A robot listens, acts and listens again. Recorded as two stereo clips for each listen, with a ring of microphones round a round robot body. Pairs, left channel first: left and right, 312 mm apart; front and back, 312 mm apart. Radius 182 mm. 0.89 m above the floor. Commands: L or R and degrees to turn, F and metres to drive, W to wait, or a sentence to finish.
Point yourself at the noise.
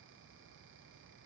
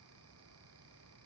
W
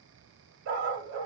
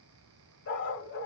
R55
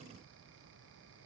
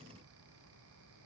W
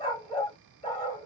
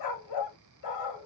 L15
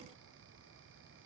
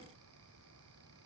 W
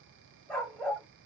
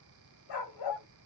Found it: a dog barking, straight ahead, 1 to 2 m away.